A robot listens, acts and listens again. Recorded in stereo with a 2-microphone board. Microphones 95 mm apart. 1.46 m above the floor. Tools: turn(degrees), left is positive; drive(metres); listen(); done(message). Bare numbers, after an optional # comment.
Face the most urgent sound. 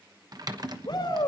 # The shout: about 55° left or 125° left.
turn(55)
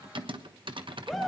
done("Facing the shout.")